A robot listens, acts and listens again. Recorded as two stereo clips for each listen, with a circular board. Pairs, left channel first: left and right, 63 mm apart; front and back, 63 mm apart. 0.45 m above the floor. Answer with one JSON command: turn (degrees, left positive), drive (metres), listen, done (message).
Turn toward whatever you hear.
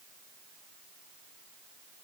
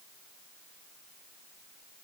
{"listen": true}
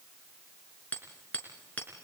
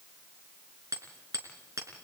{"turn": 155}
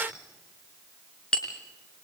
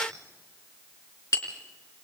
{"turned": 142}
{"turn": 15}
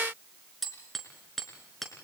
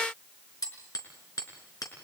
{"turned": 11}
{"done": "Facing the hammering, 2 to 4 m away."}